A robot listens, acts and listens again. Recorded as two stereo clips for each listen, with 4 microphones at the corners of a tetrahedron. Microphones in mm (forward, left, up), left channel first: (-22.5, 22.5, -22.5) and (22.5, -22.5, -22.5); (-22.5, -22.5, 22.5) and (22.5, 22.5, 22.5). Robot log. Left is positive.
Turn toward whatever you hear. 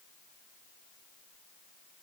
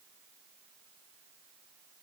cmd idle
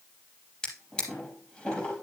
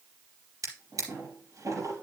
note: The drawer: 60° left.
cmd yaw +60
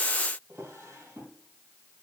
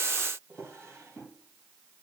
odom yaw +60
end: Facing the drawer, over 4 m away.